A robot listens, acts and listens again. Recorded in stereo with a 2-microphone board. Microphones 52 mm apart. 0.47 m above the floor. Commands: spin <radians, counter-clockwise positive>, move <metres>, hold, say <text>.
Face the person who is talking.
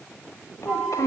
spin 1.22
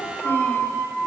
hold
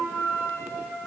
hold
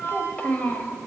spin 0.61
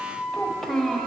spin 0.17
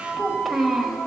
say Facing the child speaking.